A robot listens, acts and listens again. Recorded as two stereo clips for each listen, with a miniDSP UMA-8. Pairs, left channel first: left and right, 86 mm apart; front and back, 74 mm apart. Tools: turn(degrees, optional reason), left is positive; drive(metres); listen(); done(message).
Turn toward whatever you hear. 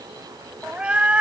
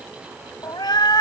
turn(degrees=-15, reason="The cat meowing: 15° right.")
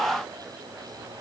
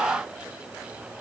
listen()
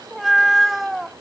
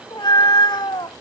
done("Found it: a cat meowing, straight ahead.")